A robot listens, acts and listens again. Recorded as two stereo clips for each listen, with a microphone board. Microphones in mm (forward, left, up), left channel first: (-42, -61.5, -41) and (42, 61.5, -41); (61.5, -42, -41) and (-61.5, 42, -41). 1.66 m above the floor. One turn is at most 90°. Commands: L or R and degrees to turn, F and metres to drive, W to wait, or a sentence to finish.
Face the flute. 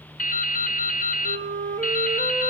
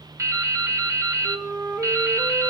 L65
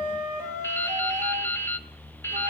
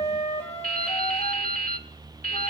L10
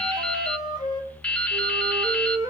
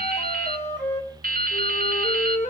Found it: a flute, straight ahead, 2 to 4 m away.